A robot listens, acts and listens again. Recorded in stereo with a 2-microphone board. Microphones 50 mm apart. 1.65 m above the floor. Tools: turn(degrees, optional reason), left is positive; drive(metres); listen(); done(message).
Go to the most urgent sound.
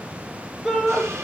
turn(degrees=-30)
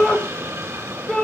turn(degrees=15, reason="So it is at 15° left.")
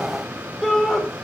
drive(metres=1.0)
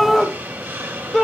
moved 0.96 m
drive(metres=1.0)
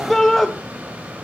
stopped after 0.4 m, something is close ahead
turn(degrees=10, reason="The shout is now 10° left.")
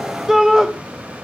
turn(degrees=-10, reason="The shout is now 10° right.")
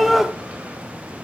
done("I am next to the shout.")